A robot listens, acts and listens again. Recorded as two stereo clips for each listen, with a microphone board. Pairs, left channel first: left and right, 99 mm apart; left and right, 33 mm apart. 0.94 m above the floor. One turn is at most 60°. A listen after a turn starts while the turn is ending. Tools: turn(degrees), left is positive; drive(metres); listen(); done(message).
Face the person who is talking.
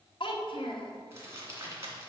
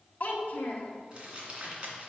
turn(degrees=55)
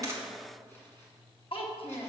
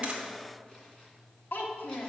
turn(degrees=60)
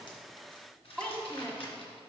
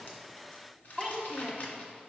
turn(degrees=10)
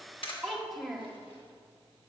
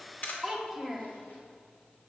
done("Facing the child speaking, 1 to 2 m away.")